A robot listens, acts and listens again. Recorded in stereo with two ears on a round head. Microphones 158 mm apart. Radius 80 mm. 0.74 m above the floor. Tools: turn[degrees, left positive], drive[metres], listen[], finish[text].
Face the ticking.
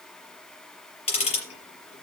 Thought: The ticking: about 35° left or 145° left.
Action: turn[35]
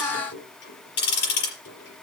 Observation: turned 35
Thought: So it is at 110° left.
Action: turn[110]
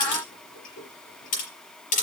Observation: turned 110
Thought: The ticking is now 50° left.
Action: turn[50]
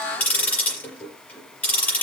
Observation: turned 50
Thought: The ticking is now 10° left.
Action: turn[10]
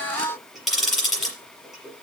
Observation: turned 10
Action: finish[Found it: ticking, straight ahead.]